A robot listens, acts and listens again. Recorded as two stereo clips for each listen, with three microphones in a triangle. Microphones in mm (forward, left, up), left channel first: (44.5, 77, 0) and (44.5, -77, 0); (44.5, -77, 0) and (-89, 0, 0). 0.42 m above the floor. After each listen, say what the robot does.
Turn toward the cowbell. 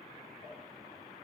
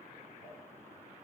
Keep listening.
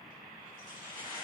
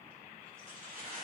Keep listening.
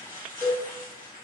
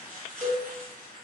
Turn 165° right.
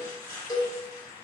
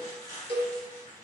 Turn 20° left.
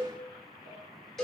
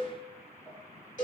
Facing the cowbell, under 1 m away.